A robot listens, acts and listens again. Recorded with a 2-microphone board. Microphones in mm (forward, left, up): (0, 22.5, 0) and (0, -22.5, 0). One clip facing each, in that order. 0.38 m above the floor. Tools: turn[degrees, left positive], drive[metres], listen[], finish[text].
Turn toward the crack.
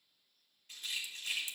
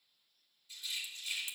Thought: The crack: about 40° right or 140° right.
Action: turn[-40]
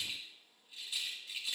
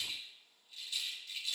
Action: listen[]
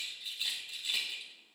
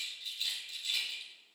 Action: finish[I heard a crack, but can't make it out now. It was about straight ahead or 100° right.]